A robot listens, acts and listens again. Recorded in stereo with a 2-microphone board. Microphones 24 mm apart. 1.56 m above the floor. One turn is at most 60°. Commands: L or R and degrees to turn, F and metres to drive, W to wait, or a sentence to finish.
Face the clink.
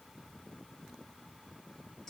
W
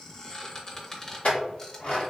L60
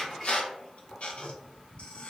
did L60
Found it: a clink, straight ahead.